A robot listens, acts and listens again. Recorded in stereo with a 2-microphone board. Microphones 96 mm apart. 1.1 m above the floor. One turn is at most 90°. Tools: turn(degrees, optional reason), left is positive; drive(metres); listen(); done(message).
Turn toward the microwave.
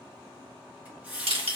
listen()
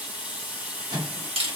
turn(degrees=-50, reason="The microwave: about 50° right or 130° right.")
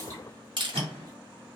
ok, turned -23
turn(degrees=-90, reason="So it is at 105° right.")
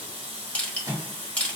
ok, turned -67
turn(degrees=-40, reason="The microwave is now 40° right.")
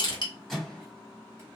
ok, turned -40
done("Facing the microwave.")